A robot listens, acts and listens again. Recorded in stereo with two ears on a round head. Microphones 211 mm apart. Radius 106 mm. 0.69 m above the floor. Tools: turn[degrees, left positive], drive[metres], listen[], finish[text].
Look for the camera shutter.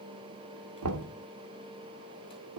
Action: listen[]
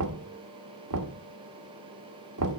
Action: listen[]
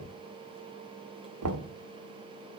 Action: finish[I can't make out a camera shutter, only knocking.]